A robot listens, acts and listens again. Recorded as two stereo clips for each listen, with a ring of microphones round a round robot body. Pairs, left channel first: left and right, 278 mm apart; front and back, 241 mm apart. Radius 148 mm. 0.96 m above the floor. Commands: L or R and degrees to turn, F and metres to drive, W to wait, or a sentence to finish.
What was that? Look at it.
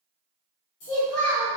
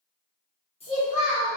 L65
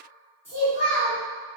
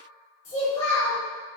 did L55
L10
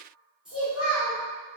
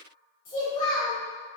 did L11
Facing the child speaking, 1 to 2 m away.